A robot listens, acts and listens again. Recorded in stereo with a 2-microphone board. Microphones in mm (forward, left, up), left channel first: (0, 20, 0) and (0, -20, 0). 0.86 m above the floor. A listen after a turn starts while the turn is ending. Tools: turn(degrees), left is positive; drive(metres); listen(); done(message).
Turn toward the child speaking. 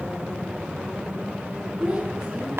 turn(degrees=-20)
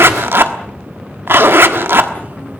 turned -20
listen()
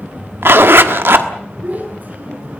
turn(degrees=-135)
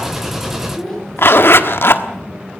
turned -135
turn(degrees=10)
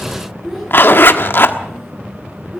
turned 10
done("Found it: a child speaking, straight ahead, over 4 m away.")